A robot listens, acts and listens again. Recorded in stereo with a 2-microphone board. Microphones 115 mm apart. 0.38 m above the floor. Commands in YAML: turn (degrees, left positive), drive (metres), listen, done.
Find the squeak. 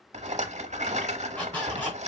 turn: 30
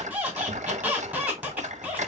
turn: -15
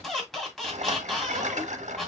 done: "Facing the squeak."